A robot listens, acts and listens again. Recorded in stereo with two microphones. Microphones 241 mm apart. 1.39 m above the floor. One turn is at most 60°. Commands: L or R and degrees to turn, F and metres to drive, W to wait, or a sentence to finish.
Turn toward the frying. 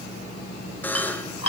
W
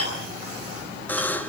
W
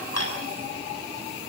I can't make out frying, only a buzzer and dishes clattering.